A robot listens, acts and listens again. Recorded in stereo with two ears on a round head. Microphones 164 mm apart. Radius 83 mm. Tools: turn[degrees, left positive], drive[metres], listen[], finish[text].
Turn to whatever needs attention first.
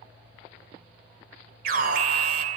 Thought: The alarm: about 55° right or 125° right.
Action: turn[-55]
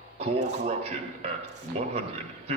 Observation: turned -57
Thought: So it is at 45° right.
Action: turn[-45]
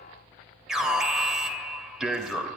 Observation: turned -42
Action: finish[Facing the alarm, 2 to 4 m away.]